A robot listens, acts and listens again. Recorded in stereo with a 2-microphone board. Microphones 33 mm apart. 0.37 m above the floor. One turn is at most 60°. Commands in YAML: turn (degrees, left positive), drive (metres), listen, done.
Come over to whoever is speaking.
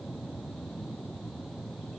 listen: true
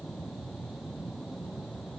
listen: true
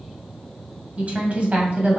turn: -40
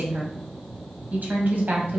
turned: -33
turn: -60
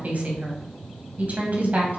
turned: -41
turn: -55
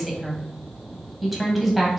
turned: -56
drive: 1.0
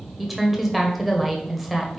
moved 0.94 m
drive: 1.0
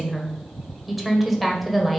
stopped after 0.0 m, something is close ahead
done: "I am next to the woman speaking."